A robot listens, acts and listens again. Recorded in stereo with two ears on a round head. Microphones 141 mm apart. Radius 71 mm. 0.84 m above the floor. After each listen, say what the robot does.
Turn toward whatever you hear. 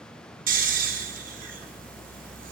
Turn 55° right.
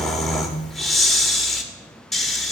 Facing the snoring, 1 to 2 m away.